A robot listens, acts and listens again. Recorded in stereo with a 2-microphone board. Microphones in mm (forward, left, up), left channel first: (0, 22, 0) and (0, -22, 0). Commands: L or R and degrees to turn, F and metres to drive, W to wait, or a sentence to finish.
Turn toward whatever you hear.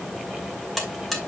L30
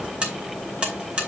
R25
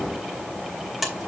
Found it: a buzzer, straight ahead.